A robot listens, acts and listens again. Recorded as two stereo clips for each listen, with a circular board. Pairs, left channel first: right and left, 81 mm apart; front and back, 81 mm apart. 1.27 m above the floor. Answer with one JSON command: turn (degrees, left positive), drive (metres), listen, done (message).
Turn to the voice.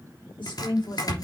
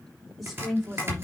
{"turn": -90}
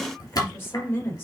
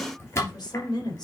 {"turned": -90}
{"turn": -30}
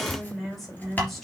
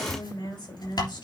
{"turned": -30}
{"done": "Found it: a woman speaking, straight ahead."}